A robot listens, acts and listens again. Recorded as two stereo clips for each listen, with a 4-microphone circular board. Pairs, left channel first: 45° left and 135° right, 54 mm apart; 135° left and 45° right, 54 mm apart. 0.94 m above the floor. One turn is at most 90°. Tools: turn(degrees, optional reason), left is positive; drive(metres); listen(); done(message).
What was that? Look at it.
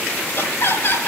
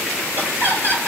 done("Found it: laughter, straight ahead, over 4 m away.")